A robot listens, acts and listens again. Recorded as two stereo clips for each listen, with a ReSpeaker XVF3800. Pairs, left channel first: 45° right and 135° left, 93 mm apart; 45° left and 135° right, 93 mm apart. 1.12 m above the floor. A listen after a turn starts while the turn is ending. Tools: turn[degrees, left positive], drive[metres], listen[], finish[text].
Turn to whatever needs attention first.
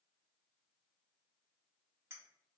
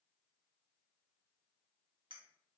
Action: listen[]
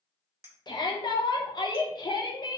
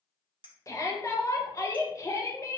Thought: The shout: 10° right.
Action: turn[-10]
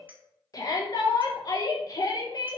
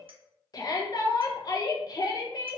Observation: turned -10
Action: finish[Facing the shout.]